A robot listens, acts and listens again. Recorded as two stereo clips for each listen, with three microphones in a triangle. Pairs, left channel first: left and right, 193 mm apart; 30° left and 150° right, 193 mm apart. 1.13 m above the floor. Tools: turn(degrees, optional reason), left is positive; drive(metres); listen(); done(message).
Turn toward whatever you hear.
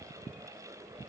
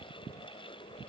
listen()
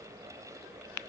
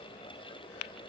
listen()
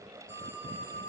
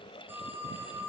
turn(degrees=-70, reason="The phone ringing: 70° right.")
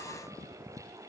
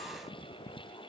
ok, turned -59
turn(degrees=-10, reason="Nothing new. It was at 10° right.")
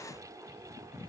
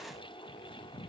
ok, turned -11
listen()
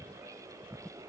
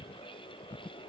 done("I heard a phone ringing from this way, but can't make it out now.")